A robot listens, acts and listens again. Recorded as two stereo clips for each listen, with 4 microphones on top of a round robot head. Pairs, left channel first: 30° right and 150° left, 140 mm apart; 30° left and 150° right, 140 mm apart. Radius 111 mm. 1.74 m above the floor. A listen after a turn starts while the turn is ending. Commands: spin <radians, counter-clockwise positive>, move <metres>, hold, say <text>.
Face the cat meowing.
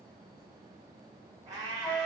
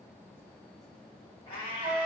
spin 1.48
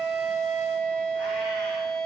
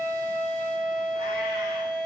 hold
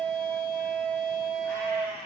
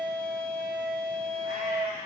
spin 0.79
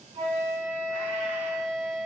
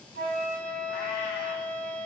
hold
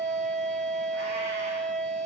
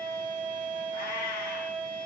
hold
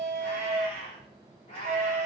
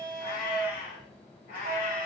spin 0.26
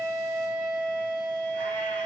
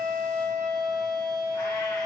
hold
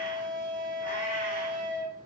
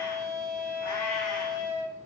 hold
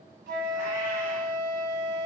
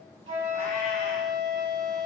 say I heard a cat meowing from this way, but can't make it out now.